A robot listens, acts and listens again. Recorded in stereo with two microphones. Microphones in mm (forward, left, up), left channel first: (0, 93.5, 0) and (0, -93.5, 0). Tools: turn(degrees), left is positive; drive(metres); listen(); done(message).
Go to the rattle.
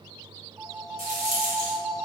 turn(degrees=-45)
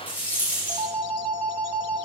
turn(degrees=-10)
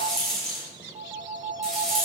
drive(metres=1.0)
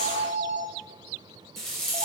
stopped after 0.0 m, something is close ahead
done("Blocked. The rattle is further on, straight ahead.")